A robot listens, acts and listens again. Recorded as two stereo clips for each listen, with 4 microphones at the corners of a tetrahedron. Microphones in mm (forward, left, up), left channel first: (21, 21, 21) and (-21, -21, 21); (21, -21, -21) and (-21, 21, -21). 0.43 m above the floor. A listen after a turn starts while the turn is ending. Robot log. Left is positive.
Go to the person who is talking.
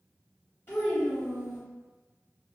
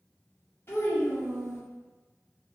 cmd fwd 1.0
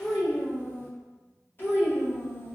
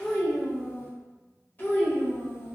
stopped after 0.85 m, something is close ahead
end: I am next to the child speaking.